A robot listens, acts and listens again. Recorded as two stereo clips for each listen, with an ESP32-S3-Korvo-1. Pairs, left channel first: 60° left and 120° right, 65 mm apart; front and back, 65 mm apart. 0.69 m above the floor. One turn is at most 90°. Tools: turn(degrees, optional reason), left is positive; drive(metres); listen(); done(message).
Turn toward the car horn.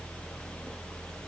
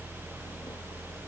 listen()
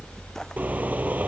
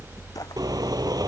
turn(degrees=90, reason="The car horn: 175° left.")
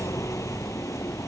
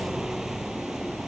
turn(degrees=85, reason="Nothing new. It was at 85° left.")
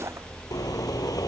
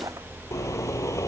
turn(degrees=35, reason="The car horn is now 35° left.")
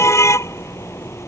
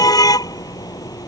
turn(degrees=15, reason="The car horn is now 15° left.")
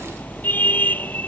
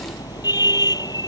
done("Found it: a car horn, straight ahead.")